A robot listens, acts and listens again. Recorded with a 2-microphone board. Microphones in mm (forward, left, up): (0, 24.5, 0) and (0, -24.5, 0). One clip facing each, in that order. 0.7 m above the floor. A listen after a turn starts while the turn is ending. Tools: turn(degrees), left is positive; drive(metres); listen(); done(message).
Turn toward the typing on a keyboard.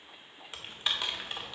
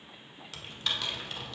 turn(degrees=20)
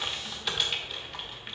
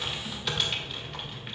done("Facing the typing on a keyboard, 1 to 2 m away.")